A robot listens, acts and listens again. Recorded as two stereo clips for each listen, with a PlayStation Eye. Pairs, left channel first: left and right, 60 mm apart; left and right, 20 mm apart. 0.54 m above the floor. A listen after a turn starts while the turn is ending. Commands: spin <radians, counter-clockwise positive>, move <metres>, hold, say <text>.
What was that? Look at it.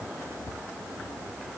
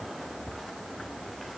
hold
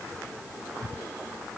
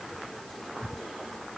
hold
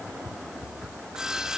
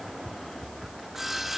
spin -0.52
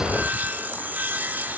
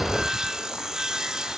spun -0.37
spin -2.62
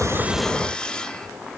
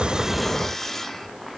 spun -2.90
spin 0.26
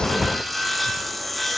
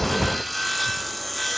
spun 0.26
say Found it: sawing, straight ahead.